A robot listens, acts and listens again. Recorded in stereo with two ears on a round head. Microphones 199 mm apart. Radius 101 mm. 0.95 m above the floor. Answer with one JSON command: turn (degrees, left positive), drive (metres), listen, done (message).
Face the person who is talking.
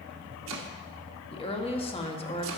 {"turn": 25}
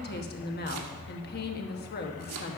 {"turn": 130}
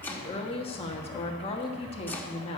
{"turn": 25}
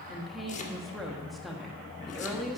{"done": "Facing the woman speaking, 1 to 2 m away."}